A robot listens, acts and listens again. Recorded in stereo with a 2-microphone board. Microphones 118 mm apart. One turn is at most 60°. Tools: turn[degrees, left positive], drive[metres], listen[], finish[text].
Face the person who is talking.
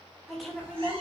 Action: turn[30]
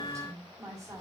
Thought: So it is at 30° right.
Action: turn[-30]
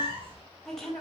Action: finish[Found it: a woman speaking, straight ahead.]